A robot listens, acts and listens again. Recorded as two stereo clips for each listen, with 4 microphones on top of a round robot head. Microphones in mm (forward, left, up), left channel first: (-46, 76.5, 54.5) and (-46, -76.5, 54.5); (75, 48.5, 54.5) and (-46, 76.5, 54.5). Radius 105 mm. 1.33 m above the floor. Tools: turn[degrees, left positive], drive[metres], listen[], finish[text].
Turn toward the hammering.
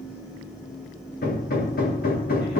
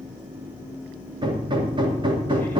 Thought: The hammering: 115° left.
Action: turn[115]
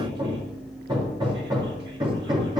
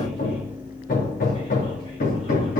Thought: The hammering is now 20° right.
Action: turn[-20]
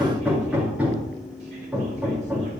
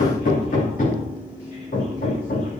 Action: finish[Found it: hammering, straight ahead.]